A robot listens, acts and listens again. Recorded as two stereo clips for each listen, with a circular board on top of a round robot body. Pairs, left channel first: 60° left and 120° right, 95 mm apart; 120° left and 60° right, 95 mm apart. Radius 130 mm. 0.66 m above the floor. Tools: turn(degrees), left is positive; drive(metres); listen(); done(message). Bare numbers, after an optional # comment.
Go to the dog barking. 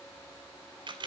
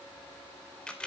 listen()
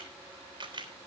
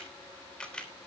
listen()
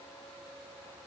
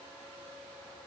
done("I can't make out a dog barking, only a camera shutter.")